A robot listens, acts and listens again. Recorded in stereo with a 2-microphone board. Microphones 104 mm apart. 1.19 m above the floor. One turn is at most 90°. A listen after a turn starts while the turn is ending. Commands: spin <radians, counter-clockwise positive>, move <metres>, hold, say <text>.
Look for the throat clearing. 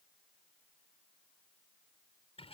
hold
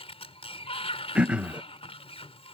spin -0.52
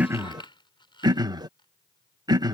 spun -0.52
spin -1.57
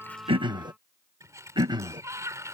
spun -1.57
spin -0.87
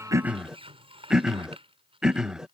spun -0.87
say Found it: throat clearing, straight ahead.